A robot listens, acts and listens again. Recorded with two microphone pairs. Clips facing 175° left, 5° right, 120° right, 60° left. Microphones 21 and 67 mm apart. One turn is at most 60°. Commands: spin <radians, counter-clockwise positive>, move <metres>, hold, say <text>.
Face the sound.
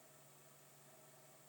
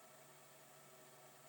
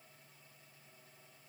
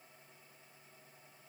hold
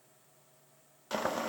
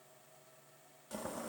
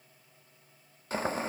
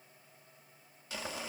spin -1.05
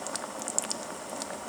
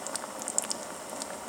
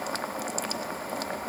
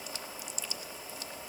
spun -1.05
spin -1.05
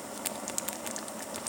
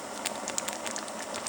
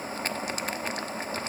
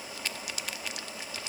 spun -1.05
spin -1.05
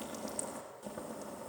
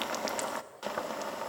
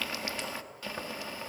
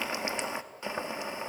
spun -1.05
say Facing the boiling, 1 to 2 m away.